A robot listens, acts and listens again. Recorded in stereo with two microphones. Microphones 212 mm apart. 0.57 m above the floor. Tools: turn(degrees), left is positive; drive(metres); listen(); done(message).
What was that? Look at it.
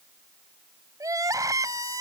turn(degrees=-15)
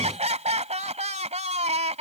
turn(degrees=-150)
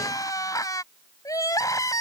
turn(degrees=15)
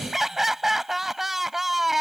done("Found it: crying, straight ahead.")